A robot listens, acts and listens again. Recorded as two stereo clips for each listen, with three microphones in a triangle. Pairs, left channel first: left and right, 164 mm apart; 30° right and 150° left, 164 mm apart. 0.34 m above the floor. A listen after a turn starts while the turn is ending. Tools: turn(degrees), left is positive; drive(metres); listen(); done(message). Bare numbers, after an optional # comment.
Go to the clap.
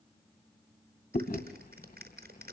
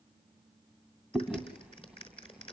# The clap: 85° right.
turn(-85)
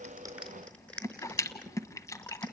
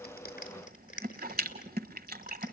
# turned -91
drive(1.0)
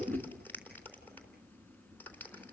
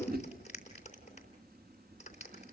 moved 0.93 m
# The clap is now 10° left.
turn(10)
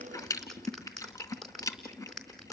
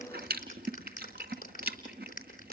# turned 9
drive(1.0)
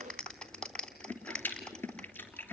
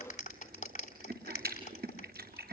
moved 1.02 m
drive(1.0)
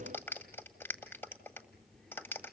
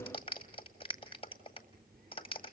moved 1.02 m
# The clap is now 15° left.
turn(15)
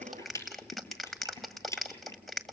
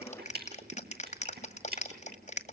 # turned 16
drive(1.0)
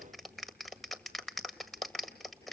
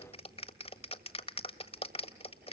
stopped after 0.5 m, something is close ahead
done("Arrived at the clap, straight ahead.")